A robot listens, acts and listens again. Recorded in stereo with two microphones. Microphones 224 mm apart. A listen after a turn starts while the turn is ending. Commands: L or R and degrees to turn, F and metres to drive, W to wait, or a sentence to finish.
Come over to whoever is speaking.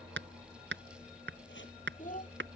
L35
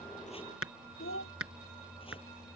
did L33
L110
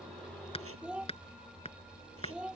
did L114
F1.0
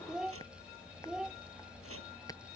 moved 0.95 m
F1.0
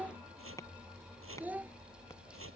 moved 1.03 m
F1.0
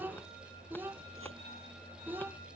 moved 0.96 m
R10
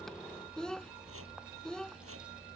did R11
F1.0
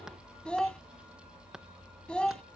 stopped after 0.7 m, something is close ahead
I am next to the child speaking.